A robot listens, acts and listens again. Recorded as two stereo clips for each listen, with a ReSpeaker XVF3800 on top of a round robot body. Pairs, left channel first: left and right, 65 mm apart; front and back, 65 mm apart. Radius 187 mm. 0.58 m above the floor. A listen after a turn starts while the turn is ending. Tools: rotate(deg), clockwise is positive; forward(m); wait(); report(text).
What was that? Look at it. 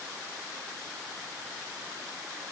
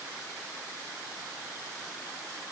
wait()
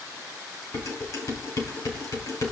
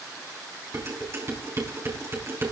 rotate(-130)
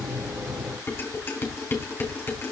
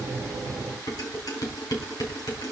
rotate(-30)
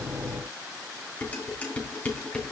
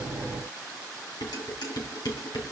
rotate(-15)
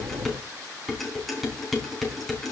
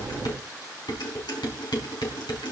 report("Facing the dishes clattering.")